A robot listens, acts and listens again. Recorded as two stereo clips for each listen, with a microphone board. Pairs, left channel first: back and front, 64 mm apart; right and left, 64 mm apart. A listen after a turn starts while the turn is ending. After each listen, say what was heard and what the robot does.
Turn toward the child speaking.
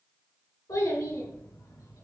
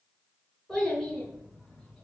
The child speaking: 170° right. Turn 170° right.
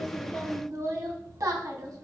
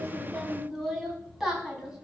Facing the child speaking.